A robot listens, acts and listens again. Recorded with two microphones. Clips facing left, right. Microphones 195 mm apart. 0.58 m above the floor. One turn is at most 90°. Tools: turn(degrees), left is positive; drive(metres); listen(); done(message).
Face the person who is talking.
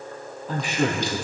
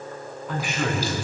turn(degrees=35)
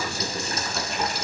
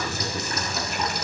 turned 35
done("Found it: a man speaking, straight ahead, over 4 m away.")